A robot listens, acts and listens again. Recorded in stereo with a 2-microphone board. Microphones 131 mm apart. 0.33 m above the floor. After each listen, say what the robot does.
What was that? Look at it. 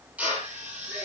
Turn 30° right.
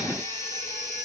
Keep listening.
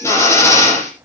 Turn 20° left.
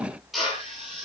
Facing the drill.